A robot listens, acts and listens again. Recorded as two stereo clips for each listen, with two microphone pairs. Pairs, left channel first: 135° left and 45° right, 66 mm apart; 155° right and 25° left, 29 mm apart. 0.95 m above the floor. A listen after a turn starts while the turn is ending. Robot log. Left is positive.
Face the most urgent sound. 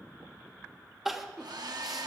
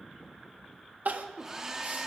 note: The crying: 40° left.
cmd yaw +40
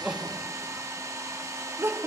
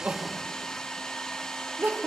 end: Facing the crying.